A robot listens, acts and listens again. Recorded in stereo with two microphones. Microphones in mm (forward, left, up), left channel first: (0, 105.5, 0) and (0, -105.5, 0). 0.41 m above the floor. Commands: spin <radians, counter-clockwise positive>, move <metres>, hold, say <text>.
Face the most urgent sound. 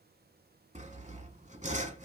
hold
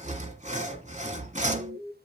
spin -1.22
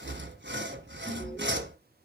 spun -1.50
hold
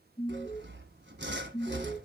spin 0.17
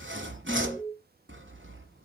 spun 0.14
say Facing the alarm, over 4 m away.